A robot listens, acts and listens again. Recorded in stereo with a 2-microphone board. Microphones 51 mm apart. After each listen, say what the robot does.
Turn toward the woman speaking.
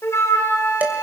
Keep listening.
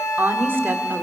Turn 50° right.
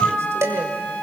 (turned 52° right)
Keep listening.
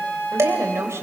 Turn 75° right.
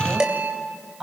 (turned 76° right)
Turn 10° right.
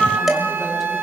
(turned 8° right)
Keep listening.
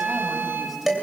Keep listening.
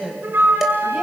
Facing the woman speaking.